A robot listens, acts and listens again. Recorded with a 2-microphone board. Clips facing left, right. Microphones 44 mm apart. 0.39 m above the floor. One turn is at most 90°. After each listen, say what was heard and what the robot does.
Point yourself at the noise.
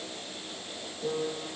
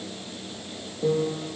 The piano: about 60° right or 120° right. Turn 60° right.
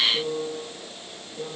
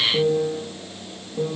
So it is at 55° right. Turn 55° right.
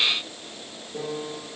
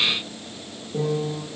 Found it: a piano, straight ahead, over 4 m away.